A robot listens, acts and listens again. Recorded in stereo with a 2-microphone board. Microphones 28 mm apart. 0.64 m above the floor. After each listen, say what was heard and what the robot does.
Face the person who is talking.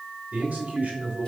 The man speaking: about 60° right or 120° right. Turn 60° right.
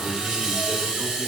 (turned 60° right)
Keep listening.
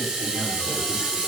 Keep listening.
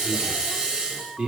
So it is at 35° right. Turn 35° right.
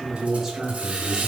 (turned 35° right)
The man speaking is now 20° right. Turn 20° right.
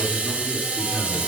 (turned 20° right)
Keep listening.
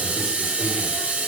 Keep listening.
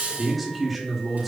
Found it: a man speaking, straight ahead, 2 to 4 m away.